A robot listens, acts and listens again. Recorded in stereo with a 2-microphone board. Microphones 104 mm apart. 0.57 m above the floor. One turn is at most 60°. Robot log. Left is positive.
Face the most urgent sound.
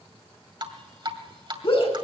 note: The shout: about 60° left or 120° left.
cmd yaw +60
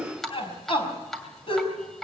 note: So it is at 60° left.
cmd yaw +60
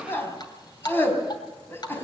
note: The shout is now 20° left.
cmd yaw +20
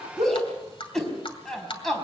end: Facing the shout, over 4 m away.